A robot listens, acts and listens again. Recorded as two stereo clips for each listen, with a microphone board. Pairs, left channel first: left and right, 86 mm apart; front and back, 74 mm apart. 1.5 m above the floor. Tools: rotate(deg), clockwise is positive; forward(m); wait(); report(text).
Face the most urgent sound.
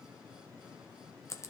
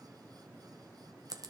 wait()
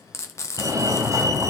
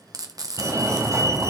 rotate(140)
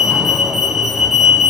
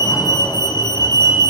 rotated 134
report("Facing the fire alarm.")